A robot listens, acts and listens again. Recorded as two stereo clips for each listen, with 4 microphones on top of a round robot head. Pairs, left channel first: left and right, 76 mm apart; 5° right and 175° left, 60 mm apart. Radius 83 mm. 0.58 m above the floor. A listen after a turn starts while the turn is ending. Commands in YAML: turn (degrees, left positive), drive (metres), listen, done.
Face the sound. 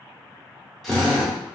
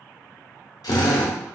done: "Found it: a drill, straight ahead, under 1 m away."